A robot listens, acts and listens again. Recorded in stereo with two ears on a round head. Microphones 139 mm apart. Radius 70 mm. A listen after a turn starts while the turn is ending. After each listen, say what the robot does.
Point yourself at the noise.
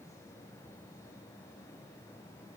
Keep listening.
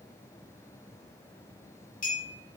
Turn 60° left.
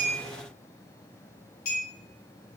Turn 60° left.
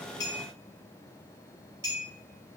Turn 20° right.
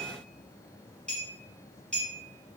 Facing the clink.